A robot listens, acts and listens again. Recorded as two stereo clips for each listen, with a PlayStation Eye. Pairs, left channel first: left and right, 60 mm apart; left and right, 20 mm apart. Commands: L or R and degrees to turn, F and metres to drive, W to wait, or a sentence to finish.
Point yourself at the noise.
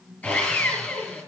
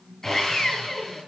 L20
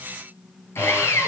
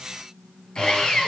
L140
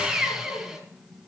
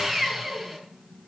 Found it: sawing, straight ahead, over 4 m away.